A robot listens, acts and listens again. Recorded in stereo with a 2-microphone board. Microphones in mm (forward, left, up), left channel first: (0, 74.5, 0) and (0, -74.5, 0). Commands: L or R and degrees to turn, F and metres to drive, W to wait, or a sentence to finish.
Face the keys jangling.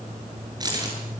R25
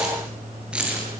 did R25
R10
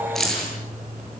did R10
Found it: keys jangling, straight ahead.